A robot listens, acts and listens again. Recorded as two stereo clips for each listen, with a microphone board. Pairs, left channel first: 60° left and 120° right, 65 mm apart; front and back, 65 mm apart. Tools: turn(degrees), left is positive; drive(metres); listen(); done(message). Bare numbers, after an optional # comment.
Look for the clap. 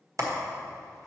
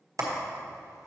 # The clap: 150° right.
turn(-150)
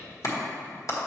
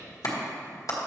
# The clap is now 25° left.
turn(25)
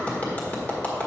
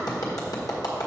done("Facing the clap.")